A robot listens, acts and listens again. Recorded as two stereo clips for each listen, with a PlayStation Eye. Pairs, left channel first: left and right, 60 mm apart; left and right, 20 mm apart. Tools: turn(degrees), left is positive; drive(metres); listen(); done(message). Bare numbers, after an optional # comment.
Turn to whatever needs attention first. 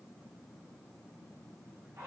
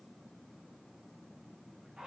listen()
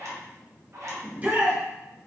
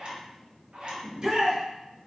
# The shout: about 30° right or 150° right.
turn(-30)
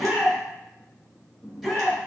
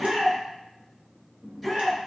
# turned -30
done("Found it: a shout, straight ahead, 1 to 2 m away.")